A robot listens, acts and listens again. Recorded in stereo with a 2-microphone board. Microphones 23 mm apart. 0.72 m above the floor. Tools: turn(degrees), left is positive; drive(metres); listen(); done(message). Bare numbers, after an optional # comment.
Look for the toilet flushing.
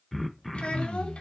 listen()
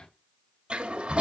# The toilet flushing: about 70° right or 110° right.
turn(-70)
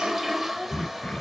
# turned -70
done("Found it: a toilet flushing, straight ahead, 1 to 2 m away.")